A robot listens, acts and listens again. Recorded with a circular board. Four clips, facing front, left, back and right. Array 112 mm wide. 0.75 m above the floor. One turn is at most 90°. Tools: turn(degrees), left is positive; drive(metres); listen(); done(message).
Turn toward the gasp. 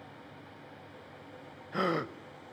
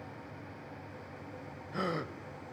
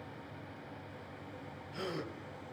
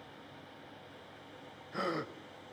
done("Facing the gasp, under 1 m away.")